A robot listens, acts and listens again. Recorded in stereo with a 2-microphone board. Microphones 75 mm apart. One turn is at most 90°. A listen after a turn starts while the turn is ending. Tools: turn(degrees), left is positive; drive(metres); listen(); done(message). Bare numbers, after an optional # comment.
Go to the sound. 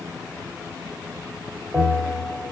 turn(30)
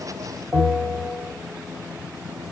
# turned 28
# So it is at 30° right.
turn(-30)
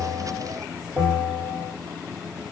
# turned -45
# The bell is now 15° left.
turn(15)
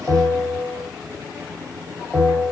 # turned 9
# The bell is now 10° left.
turn(10)
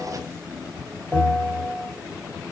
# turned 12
drive(1.0)
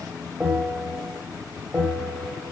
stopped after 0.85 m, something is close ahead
done("I am next to the bell.")